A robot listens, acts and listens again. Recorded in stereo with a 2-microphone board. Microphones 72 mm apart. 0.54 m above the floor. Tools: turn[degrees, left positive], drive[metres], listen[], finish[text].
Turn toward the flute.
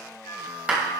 Thought: The flute: about 75° left or 105° left.
Action: turn[75]
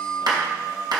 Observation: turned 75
Action: finish[Found it: a flute, straight ahead.]